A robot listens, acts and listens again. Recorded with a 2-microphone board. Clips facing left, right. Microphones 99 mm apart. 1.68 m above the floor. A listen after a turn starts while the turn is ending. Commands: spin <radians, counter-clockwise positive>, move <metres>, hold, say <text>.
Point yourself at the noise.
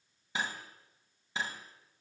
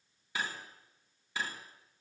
spin 0.44
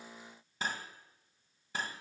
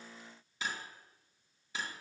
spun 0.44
spin 2.18
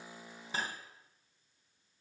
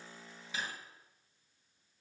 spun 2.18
spin 0.79
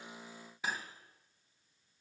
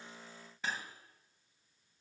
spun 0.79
spin 0.17
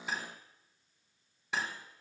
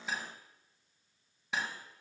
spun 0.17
say Facing the cutlery clinking.